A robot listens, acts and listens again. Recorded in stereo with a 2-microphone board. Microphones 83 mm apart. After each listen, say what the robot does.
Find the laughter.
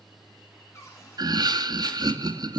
Turn 55° right.
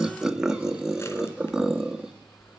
Turn 10° right.
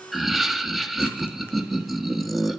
Found it: laughter, straight ahead.